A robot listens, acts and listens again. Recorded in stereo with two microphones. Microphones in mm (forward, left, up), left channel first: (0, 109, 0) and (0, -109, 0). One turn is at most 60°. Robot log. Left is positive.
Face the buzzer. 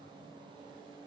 cmd idle
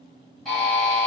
cmd yaw +30
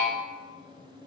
cmd idle
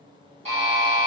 note: So it is at 30° right.
cmd yaw -30
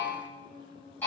end: Facing the buzzer, 1 to 2 m away.